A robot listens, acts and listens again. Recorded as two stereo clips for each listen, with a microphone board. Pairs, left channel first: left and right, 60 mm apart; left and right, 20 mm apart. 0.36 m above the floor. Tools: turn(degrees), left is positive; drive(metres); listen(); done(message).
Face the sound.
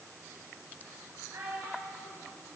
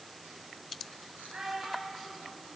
turn(degrees=-60)
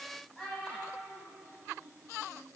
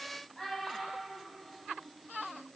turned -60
turn(degrees=25)
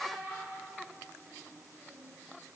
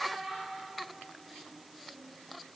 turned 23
turn(degrees=10)
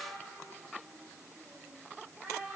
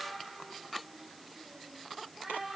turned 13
done("Found it: a child speaking, straight ahead, 2 to 4 m away.")